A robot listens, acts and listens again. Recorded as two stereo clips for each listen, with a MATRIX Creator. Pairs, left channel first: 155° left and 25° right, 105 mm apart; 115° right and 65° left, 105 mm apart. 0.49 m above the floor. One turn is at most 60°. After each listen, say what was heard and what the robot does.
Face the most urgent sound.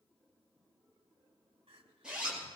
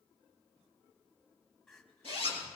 The crying: 30° right. Turn 30° right.
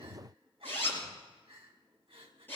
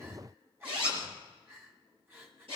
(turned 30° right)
Found it: crying, straight ahead, 2 to 4 m away.